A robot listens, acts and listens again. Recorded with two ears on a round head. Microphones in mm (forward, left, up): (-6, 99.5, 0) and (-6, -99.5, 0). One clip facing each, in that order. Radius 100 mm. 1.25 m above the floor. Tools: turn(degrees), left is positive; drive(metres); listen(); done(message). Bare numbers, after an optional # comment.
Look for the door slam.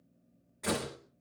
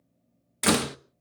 turn(-90)
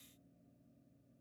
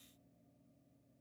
done("I heard a door slam from this way, but can't make it out now.")